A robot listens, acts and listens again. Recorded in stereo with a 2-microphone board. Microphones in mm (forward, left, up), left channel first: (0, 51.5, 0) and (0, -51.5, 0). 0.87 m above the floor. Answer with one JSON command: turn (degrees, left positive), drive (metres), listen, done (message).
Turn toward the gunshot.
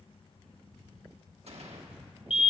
{"turn": -70}
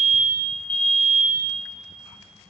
{"listen": true}
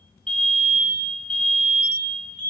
{"done": "I heard a gunshot, but can't make it out now. It was about straight ahead or 40° right."}